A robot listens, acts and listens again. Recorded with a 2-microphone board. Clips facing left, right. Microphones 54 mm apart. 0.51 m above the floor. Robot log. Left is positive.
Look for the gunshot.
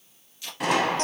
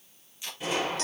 cmd yaw +90
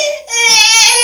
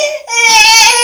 end: Facing where the gunshot came from. I can't hear it now.